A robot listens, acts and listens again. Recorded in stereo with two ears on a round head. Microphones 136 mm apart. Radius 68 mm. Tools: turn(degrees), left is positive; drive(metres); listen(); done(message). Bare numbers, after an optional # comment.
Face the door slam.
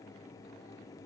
listen()
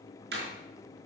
turn(-90)
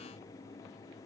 done("Facing where the door slam came from. I can't hear it now.")